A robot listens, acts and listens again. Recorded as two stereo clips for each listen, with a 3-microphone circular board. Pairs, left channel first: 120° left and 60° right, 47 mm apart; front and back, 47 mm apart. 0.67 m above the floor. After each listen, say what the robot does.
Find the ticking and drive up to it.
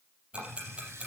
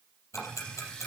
Drive 1.0 m forward.
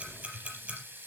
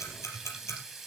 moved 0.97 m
Drive 1.0 m forward.
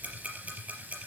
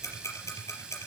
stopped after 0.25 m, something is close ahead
Something is in my way. I am facing the ticking but have not reached it.